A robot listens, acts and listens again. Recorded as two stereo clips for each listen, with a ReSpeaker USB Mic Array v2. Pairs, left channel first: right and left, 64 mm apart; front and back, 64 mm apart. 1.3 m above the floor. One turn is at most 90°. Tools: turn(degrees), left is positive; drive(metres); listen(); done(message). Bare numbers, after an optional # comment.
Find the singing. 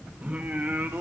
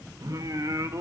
# The singing: 150° left.
turn(90)
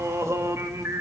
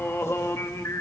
# The singing is now 45° left.
turn(45)
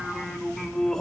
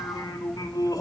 # The singing is now 10° right.
turn(-10)
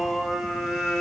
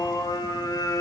done("Found it: singing, straight ahead.")